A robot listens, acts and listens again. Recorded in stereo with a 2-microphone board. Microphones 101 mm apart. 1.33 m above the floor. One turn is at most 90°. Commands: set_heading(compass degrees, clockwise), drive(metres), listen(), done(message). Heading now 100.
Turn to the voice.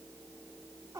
listen()
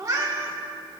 listen()
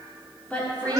set_heading(70)
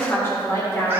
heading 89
set_heading(64)
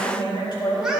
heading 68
set_heading(338)
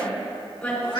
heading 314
set_heading(299)
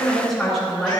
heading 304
done("Facing the woman speaking, over 4 m away.")